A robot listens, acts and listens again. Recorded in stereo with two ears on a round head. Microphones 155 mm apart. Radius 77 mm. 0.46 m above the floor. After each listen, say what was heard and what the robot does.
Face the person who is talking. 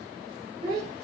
The child speaking: about 20° right or 160° right. Turn 20° right.
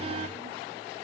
Keep listening.
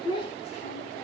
So it is at 30° left. Turn 30° left.
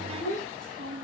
The child speaking is now 55° left. Turn 55° left.
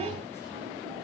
Keep listening.
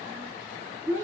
The child speaking is now 20° left. Turn 20° left.
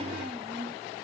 Keep listening.
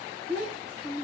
Found it: a child speaking, straight ahead, 2 to 4 m away.